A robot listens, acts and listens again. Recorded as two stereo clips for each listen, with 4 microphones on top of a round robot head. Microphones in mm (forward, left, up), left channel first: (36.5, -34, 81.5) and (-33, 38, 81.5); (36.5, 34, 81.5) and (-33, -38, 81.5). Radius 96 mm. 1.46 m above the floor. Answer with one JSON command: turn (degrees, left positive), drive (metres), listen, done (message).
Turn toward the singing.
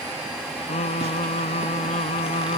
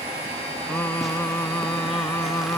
{"turn": -20}
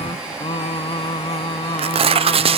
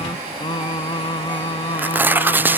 {"done": "Found it: singing, straight ahead."}